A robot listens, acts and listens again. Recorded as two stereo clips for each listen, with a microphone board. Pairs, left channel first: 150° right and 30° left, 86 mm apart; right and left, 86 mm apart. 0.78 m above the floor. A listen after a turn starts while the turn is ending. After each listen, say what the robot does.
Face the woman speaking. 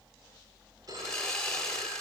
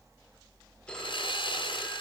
Keep listening.
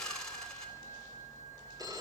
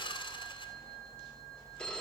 Keep listening.
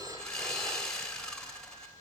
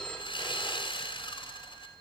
I can't make out a woman speaking to turn to.